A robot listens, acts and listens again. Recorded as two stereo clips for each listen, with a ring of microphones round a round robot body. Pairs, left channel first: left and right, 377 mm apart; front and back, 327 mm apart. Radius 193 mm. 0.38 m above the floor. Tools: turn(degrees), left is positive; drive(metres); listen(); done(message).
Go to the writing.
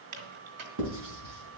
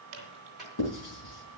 turn(degrees=-40)
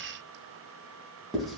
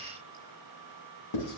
drive(metres=1.0)
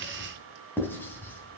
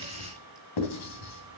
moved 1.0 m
drive(metres=1.0)
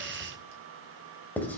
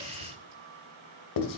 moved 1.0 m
drive(metres=1.0)
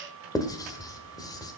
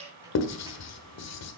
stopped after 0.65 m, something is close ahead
turn(degrees=10)
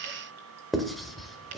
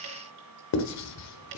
done("I am next to the writing.")